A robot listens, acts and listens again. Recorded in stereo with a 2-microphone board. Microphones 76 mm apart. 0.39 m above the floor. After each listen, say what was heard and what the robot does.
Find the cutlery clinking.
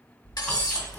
The cutlery clinking: about 60° left or 120° left. Turn 60° left.
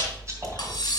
So it is at 60° left. Turn 60° left.
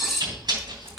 Found it: cutlery clinking, straight ahead.